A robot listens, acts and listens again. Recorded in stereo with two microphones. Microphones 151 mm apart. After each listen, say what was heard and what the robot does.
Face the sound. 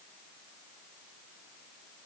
Keep listening.
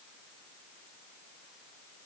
Keep listening.
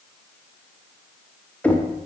Turn 30° left.
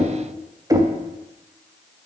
So it is at 25° right. Turn 25° right.
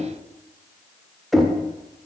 Found it: knocking, straight ahead, 1 to 2 m away.